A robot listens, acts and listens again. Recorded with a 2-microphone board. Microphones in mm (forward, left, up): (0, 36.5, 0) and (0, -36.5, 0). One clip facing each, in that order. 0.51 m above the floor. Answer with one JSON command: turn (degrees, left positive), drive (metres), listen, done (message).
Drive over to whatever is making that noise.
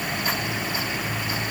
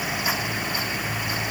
{"listen": true}
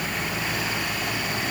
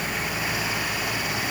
{"listen": true}
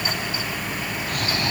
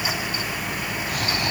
{"turn": -30}
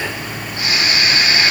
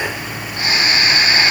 {"turn": -140}
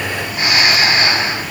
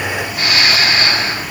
{"turn": 25}
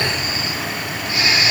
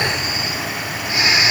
{"turn": -15}
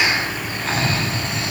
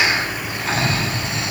{"drive": 1.0}
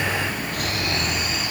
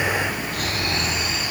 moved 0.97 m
{"drive": 1.0}
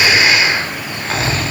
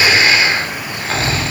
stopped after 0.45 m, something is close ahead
{"done": "Arrived at the snoring, straight ahead."}